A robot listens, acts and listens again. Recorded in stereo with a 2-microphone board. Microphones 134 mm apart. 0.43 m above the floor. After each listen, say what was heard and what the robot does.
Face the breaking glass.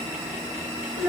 Keep listening.
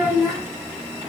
Keep listening.
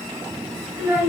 I can't make out breaking glass to turn to.